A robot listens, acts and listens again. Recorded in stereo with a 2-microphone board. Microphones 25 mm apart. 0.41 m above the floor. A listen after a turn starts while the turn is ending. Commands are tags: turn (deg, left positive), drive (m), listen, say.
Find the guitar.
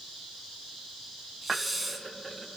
<listen/>
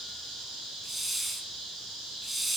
<listen/>
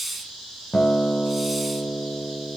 <turn deg="50"/>
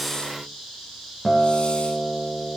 <turn deg="10"/>
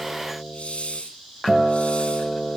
<say>Facing the guitar, 1 to 2 m away.</say>